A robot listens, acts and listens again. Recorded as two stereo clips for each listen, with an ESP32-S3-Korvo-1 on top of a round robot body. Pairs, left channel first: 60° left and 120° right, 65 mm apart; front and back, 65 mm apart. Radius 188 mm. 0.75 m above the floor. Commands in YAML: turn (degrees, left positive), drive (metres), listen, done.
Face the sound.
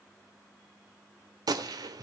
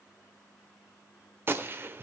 turn: -125
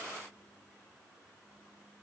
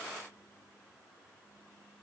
done: "Facing where the gunshot came from. I can't hear it now."